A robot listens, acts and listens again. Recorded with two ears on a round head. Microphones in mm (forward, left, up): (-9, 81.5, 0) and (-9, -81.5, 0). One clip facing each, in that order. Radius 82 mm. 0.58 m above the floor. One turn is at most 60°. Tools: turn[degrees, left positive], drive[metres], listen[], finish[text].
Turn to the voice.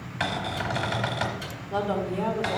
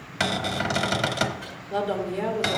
Thought: The woman speaking: about 20° right or 160° right.
Action: turn[-20]
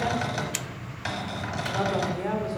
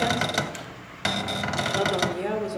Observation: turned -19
Thought: So it is at 145° right.
Action: turn[-60]
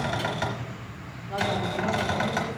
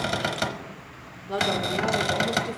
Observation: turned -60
Thought: The woman speaking is now 80° right.
Action: turn[-60]
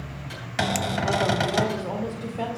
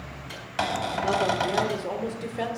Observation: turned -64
Thought: The woman speaking is now 20° right.
Action: turn[-20]
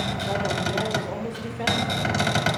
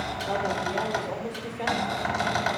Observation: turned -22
Action: finish[Found it: a woman speaking, straight ahead, 1 to 2 m away.]